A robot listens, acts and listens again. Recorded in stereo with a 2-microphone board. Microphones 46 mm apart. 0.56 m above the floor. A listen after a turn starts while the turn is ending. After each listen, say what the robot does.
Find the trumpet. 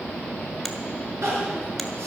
Keep listening.
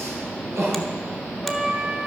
Turn 20° right.
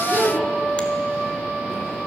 Turn 135° right.
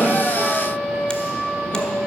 Facing the trumpet.